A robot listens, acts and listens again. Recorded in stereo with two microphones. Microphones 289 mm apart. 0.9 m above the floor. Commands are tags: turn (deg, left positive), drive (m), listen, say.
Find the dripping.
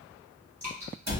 <turn deg="-70"/>
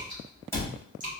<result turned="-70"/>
<turn deg="-30"/>
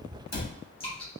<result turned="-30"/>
<turn deg="20"/>
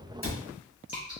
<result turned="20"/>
<say>Facing the dripping, 1 to 2 m away.</say>